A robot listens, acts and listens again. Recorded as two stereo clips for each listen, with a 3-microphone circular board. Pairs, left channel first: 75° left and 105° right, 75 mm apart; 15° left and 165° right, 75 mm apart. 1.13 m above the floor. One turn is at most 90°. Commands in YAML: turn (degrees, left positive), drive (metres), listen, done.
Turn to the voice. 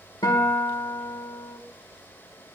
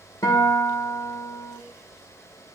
listen: true
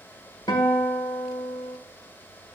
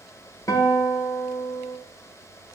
listen: true
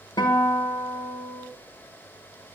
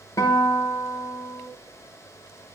done: "I can't make out anyone speaking to turn to."